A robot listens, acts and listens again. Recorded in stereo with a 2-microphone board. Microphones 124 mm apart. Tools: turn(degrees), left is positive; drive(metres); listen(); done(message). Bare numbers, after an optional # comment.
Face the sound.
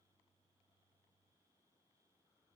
listen()
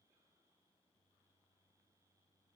listen()
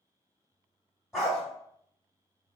turn(30)
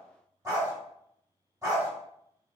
# So it is at 30° right.
turn(-30)
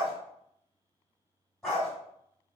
done("Found it: a dog barking, straight ahead.")